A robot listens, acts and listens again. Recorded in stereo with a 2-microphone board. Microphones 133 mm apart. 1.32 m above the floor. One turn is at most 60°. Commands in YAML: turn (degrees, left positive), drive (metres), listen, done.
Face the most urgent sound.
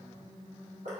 listen: true
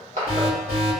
turn: -20
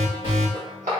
turn: -60
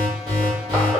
turn: -60
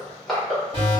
turn: -45
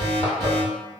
done: "Found it: an alarm, straight ahead, 1 to 2 m away."